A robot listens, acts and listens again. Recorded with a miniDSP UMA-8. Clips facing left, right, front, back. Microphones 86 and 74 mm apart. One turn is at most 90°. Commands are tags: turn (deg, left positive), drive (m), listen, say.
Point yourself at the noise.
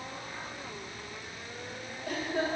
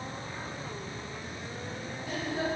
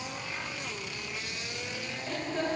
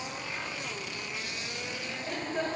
<turn deg="90"/>
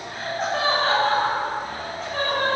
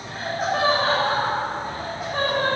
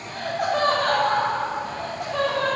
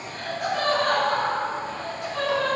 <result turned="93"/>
<turn deg="-15"/>
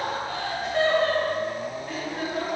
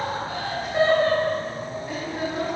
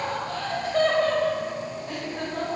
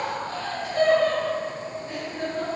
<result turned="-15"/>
<say>Found it: laughter, straight ahead.</say>